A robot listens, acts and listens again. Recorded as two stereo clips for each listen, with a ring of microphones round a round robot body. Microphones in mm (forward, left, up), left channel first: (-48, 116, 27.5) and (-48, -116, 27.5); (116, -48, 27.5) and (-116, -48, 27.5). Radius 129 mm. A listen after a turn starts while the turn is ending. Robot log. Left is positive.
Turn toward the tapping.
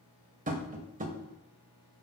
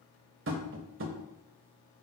note: The tapping: 145° right.
cmd yaw -145
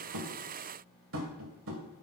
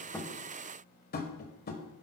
note: The tapping is now 50° right.
cmd yaw -50
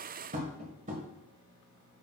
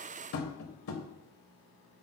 note: The tapping is now 30° right.
cmd yaw -30
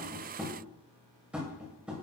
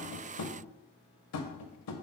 end: Facing the tapping.